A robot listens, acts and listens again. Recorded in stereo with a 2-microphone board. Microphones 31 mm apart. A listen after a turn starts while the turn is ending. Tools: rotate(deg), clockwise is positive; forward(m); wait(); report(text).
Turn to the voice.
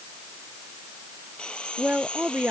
rotate(90)
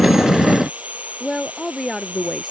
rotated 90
report("Facing the woman speaking.")